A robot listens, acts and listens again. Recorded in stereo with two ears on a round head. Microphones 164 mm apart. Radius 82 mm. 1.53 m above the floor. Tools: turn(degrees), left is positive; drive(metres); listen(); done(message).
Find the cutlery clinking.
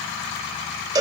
listen()
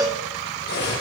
turn(degrees=65)
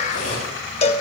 turn(degrees=50)
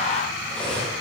done("Facing the cutlery clinking, over 4 m away.")